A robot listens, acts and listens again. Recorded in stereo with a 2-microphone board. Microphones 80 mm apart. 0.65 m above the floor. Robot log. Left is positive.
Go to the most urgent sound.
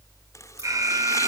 note: The alarm: about 45° right or 135° right.
cmd yaw -45
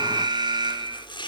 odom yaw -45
note: So it is at 85° right.
cmd yaw -85
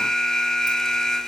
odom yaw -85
note: The alarm is now 10° left.
cmd yaw +10
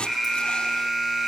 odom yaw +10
cmd fwd 1.0
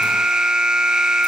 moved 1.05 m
note: The alarm is now 10° right.
cmd yaw -10
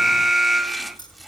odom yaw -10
cmd fwd 1.0
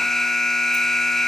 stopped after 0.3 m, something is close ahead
end: Arrived at the alarm, straight ahead.